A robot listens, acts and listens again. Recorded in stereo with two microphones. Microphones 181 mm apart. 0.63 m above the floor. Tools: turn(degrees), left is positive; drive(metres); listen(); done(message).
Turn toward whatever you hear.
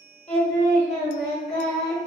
turn(degrees=35)
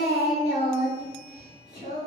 turn(degrees=110)
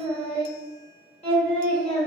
turn(degrees=35)
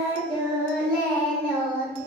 done("Facing the singing.")